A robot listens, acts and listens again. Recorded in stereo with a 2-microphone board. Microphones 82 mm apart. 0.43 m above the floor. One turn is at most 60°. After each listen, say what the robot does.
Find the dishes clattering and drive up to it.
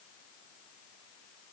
Keep listening.
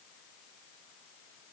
Keep listening.
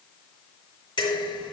Turn 60° left.
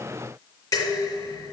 Turn 45° left.
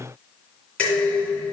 Turn 15° left.
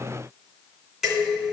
Drive 1.0 m forward.
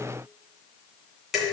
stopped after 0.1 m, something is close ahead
Blocked. The dishes clattering is further on, straight ahead.